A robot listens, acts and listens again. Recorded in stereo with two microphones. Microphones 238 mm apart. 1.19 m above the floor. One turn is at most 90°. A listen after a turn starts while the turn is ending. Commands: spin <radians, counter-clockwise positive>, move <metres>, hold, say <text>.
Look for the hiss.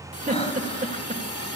spin 1.57
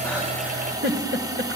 spin -0.26
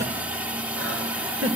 say Found it: a hiss, straight ahead, 2 to 4 m away.